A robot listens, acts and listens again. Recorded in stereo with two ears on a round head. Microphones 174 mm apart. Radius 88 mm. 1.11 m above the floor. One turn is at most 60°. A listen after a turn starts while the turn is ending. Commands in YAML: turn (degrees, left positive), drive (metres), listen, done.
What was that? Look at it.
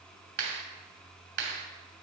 turn: -55
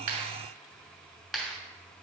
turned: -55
done: "Facing the clap."